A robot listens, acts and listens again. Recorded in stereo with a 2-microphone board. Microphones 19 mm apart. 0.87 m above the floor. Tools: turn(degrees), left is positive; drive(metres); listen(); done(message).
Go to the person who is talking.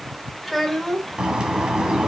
turn(degrees=-30)
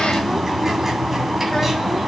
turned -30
listen()
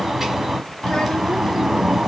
listen()
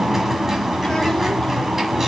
done("I heard a child speaking, but can't make it out now. It was about 25° left or 145° right. I did not reach it.")